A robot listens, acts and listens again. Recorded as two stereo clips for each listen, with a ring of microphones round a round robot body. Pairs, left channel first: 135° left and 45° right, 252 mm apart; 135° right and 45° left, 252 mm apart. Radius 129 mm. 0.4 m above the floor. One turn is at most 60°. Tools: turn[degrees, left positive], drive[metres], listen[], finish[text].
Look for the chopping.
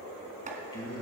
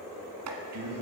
Thought: The chopping: 15° left.
Action: turn[15]
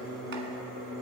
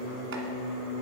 Action: listen[]
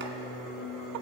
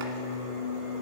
Action: listen[]
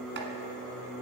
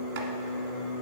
Action: finish[Facing where the chopping came from. I can't hear it now.]